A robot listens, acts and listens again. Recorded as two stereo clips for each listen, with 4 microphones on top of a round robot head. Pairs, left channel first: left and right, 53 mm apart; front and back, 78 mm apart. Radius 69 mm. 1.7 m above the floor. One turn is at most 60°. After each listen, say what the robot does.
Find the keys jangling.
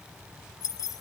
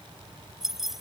Turn 60° left.
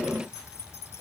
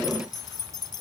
Turn 30° left.
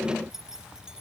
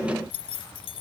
Turn 10° right.
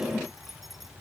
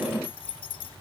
Found it: keys jangling, straight ahead.